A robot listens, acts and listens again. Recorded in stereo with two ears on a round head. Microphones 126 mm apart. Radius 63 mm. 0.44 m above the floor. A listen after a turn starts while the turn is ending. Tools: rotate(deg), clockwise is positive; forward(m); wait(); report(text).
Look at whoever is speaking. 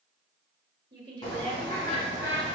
rotate(35)
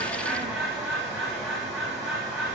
wait()
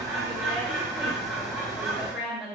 report("Found it: a woman speaking, straight ahead, 1 to 2 m away.")